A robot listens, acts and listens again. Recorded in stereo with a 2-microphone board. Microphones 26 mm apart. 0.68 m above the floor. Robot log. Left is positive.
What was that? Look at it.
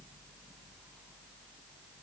cmd idle
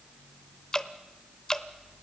note: The dripping: about 30° left or 150° left.
cmd yaw +30
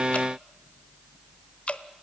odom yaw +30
note: So it is at 125° left.
cmd yaw +125
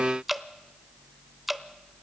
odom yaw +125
note: The dripping is now 10° right.
cmd yaw -10
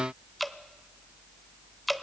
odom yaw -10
end: Found it: dripping, straight ahead, under 1 m away.